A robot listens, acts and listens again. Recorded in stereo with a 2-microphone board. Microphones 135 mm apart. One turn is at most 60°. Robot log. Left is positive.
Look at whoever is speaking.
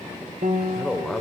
cmd yaw +30
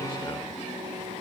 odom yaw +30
cmd idle
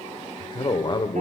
note: So it is at 145° left.
cmd yaw +60
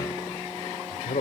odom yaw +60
note: The man speaking is now 95° left.
cmd yaw +60
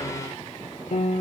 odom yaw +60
note: Nothing new. It was at 35° left.
cmd yaw +35
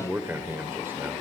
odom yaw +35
note: The man speaking is now 20° right.
cmd yaw -20
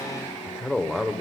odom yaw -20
end: Facing the man speaking.